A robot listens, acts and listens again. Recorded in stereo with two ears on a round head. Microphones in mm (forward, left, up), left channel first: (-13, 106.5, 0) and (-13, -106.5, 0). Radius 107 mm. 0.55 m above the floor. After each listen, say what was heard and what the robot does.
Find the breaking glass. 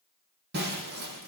The breaking glass: about 45° right or 135° right. Turn 45° right.
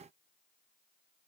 Keep listening.
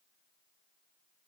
I heard breaking glass, but can't make it out now. It was about straight ahead or 90° right.